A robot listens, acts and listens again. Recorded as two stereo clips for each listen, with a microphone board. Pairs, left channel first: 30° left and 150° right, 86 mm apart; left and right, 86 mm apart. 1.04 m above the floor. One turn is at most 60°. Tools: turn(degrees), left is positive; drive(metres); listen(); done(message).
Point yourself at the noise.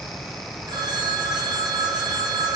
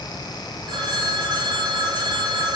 turn(degrees=-60)
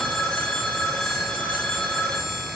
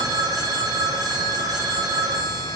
turn(degrees=-50)
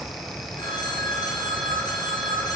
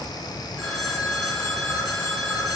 done("Found it: a phone ringing, straight ahead, 2 to 4 m away.")